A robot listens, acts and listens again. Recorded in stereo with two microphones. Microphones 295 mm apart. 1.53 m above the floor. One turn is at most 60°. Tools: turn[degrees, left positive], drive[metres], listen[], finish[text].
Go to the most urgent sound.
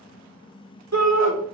Thought: The shout: about 65° right or 115° right.
Action: turn[-60]
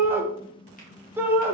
Thought: So it is at 10° right.
Action: turn[-10]
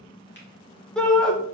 Action: drive[1.0]
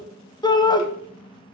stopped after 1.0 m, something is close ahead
Thought: The shout is now 15° left.
Action: turn[15]
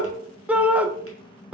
Action: finish[I am next to the shout.]